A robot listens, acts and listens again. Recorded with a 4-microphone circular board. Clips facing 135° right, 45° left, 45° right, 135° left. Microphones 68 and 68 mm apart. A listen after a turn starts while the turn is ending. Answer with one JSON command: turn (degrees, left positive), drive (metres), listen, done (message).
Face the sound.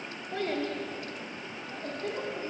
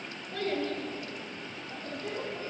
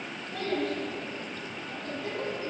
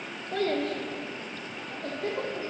{"turn": 180}
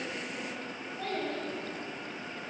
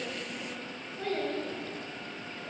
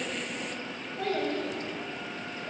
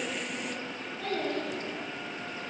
{"turn": -10}
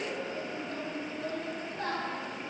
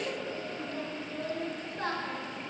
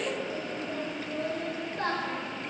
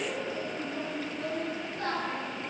{"done": "Facing the child speaking."}